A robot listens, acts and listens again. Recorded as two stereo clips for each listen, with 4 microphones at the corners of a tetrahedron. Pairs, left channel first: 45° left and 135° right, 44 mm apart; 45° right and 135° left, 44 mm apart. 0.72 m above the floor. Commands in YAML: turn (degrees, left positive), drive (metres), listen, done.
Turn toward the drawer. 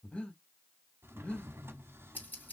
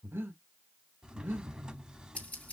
turn: -155
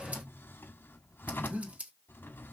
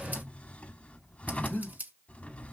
turn: 10
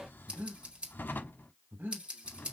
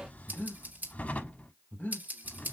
done: "Facing the drawer, under 1 m away."